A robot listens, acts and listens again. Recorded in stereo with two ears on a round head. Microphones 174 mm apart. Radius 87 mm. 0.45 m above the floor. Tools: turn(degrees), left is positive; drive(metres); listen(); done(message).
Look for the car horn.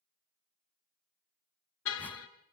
turn(degrees=90)
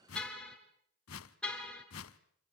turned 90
done("Facing the car horn, 2 to 4 m away.")